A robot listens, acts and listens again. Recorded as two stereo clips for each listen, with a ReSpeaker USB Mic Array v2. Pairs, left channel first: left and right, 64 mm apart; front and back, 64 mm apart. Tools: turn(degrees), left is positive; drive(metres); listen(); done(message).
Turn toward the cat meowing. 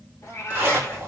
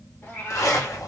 turn(degrees=50)
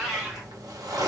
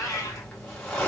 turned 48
turn(degrees=-15)
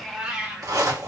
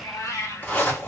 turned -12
turn(degrees=-20)
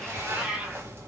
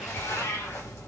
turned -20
turn(degrees=-20)
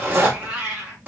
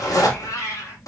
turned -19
turn(degrees=-20)
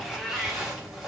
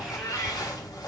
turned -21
done("Facing the cat meowing, 1 to 2 m away.")